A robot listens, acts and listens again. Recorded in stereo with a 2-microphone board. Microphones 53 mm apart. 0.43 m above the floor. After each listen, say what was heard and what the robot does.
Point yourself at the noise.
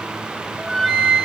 Turn 30° left.
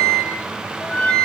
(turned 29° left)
So it is at 145° left. Turn 145° left.
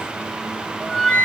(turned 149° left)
Found it: a flute, straight ahead.